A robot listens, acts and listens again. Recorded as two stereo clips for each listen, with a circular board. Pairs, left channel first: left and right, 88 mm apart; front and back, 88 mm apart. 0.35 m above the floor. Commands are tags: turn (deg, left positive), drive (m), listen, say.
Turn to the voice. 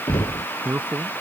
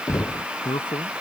<turn deg="-20"/>
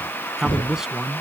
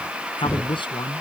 <say>Facing the man speaking.</say>